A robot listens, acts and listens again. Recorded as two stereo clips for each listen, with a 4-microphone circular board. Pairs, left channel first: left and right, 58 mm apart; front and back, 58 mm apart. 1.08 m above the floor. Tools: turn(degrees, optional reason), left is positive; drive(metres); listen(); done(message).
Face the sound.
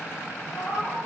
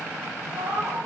turn(degrees=145, reason="The cat meowing: 145° left.")
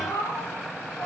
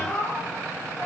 turn(degrees=55, reason="The cat meowing is now 55° left.")
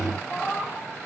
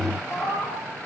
done("Found it: a cat meowing, straight ahead, over 4 m away.")